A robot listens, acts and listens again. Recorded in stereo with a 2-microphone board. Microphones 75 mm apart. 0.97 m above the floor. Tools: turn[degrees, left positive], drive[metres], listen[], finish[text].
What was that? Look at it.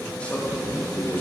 Thought: The man speaking: about 25° left or 155° left.
Action: turn[25]
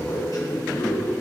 Thought: So it is at 120° left.
Action: turn[120]
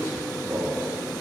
Thought: The man speaking is now 40° right.
Action: turn[-40]
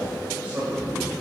Thought: The man speaking is now 25° right.
Action: turn[-25]
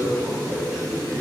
Thought: The man speaking is now 10° right.
Action: turn[-10]
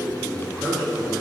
Action: finish[Found it: a man speaking, straight ahead.]